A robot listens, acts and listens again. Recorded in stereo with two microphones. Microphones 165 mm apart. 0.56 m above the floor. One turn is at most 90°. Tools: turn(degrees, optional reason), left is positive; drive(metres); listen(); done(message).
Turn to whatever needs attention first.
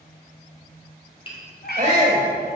turn(degrees=-45, reason="The shout: about 45° right or 135° right.")
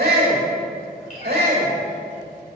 turn(degrees=-85, reason="So it is at 85° right.")
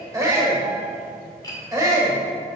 turn(degrees=-20, reason="The shout is now 20° right.")
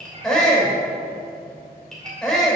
done("Facing the shout.")